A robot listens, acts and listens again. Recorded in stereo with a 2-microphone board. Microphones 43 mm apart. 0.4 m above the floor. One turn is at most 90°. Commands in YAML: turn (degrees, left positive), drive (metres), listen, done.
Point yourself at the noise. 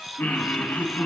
turn: 45
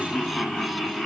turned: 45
done: "Found it: laughter, straight ahead, 2 to 4 m away."